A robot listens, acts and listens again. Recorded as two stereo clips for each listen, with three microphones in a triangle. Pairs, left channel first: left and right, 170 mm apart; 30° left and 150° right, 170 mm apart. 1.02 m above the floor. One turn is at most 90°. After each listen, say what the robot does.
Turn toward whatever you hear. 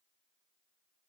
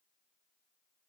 Keep listening.
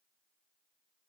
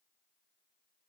Keep listening.
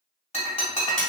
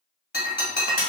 Turn 45° left.
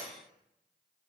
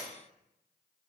I heard breaking glass from this way, but can't make it out now.